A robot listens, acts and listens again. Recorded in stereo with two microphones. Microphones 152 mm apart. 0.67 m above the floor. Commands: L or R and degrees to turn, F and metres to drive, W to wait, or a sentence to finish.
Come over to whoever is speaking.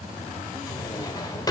W
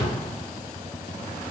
W
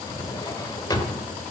I can't make out anyone speaking, only a drawer.